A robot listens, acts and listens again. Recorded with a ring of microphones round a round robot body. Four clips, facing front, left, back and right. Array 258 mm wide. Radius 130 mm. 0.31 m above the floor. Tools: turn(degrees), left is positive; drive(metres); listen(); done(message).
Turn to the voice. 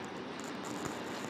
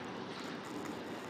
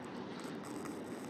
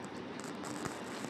listen()
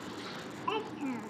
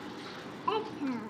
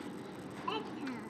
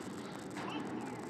turn(degrees=70)
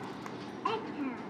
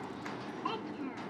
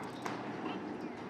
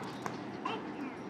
turn(degrees=10)
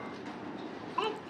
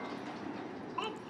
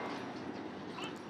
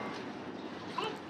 done("Found it: a child speaking, straight ahead.")